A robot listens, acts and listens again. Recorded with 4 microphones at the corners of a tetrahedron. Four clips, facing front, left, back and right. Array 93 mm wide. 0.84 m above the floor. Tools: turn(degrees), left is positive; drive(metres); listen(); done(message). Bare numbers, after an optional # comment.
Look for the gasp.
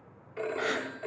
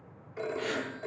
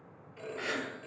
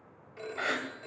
# The gasp: 55° right.
turn(-55)
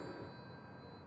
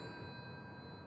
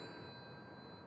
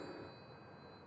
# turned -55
done("I heard a gasp from this way, but can't make it out now.")